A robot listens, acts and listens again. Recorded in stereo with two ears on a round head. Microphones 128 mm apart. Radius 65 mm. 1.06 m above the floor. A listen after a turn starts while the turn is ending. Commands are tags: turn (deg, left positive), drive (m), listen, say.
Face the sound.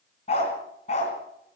<turn deg="45"/>
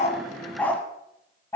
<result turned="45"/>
<turn deg="20"/>
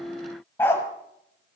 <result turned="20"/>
<turn deg="15"/>
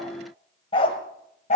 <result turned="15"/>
<turn deg="50"/>
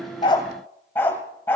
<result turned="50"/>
<turn deg="15"/>
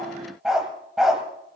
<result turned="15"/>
<say>Found it: a dog barking, straight ahead, 1 to 2 m away.</say>